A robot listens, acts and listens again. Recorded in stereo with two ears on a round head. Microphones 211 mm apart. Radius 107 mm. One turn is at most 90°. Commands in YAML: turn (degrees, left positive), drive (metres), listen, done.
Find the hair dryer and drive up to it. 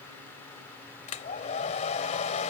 turn: 30
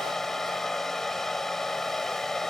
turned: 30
drive: 1.0
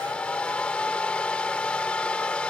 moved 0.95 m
drive: 1.0
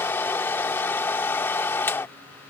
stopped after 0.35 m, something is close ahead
turn: 10
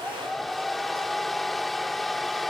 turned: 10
done: "I am next to the hair dryer."